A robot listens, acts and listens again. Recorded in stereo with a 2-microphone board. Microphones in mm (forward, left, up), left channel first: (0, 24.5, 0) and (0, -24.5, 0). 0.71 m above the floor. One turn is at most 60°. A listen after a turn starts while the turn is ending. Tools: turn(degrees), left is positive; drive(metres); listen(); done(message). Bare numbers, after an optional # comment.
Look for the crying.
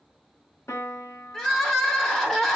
turn(30)
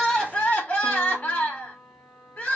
# So it is at 145° left.
turn(60)
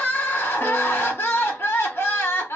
# The crying is now 120° left.
turn(60)
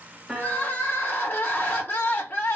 # The crying is now 50° left.
turn(50)
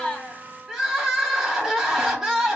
# The crying is now 10° right.
turn(-10)
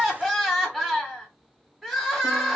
done("Found it: crying, straight ahead.")